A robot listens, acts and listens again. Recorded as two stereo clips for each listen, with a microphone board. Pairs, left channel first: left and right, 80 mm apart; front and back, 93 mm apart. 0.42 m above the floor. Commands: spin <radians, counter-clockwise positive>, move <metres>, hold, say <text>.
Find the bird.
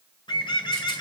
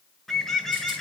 spin 1.57
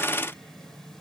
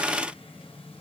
hold
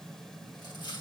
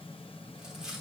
hold
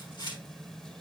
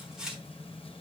say I heard a bird from this way, but can't make it out now.